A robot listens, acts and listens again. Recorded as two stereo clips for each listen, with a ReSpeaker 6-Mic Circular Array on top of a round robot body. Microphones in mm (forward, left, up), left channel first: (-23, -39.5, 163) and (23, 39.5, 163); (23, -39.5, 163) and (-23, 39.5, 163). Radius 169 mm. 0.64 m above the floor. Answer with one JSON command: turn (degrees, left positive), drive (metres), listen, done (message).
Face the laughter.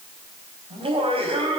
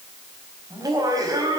{"turn": 70}
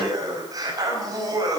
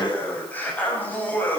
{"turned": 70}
{"turn": 10}
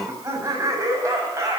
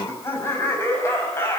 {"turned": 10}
{"done": "Facing the laughter, over 4 m away."}